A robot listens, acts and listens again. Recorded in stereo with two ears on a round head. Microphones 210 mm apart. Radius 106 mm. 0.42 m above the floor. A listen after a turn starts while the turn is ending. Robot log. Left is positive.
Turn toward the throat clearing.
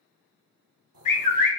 note: The throat clearing: about 65° right or 115° right.
cmd yaw -65
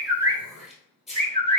end: Facing the throat clearing.